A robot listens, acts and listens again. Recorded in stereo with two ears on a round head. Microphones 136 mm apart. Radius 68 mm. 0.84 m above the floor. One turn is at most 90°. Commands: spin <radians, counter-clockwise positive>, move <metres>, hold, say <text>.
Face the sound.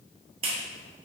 spin -0.70
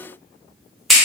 say Facing the clap, under 1 m away.